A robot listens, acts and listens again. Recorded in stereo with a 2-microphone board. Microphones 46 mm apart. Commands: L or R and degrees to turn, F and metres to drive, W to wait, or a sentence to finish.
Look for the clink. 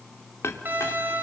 L90
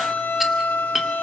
Facing the clink, 1 to 2 m away.